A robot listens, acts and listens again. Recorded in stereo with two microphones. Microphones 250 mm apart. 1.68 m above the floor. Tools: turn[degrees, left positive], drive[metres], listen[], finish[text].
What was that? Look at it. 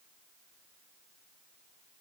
Action: listen[]
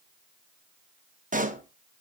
Thought: The pop: about 30° right or 150° right.
Action: turn[-30]
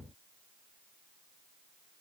Action: listen[]
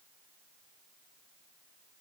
Action: finish[I heard a pop, but can't make it out now. It was about straight ahead or 120° right.]